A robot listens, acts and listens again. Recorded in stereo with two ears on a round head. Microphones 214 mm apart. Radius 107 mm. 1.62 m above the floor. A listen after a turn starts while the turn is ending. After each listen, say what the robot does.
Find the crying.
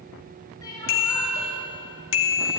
Turn 15° left.
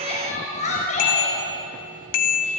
Turn 150° left.
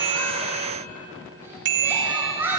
Turn 10° right.
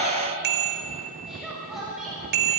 Found it: crying, straight ahead, over 4 m away.